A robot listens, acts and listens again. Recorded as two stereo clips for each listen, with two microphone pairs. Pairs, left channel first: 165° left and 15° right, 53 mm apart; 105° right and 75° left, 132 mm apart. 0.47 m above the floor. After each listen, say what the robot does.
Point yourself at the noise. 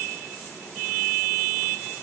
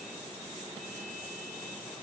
Keep listening.
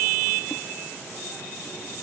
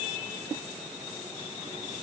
Keep listening.
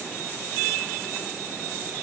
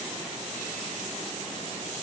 I can't make out anything.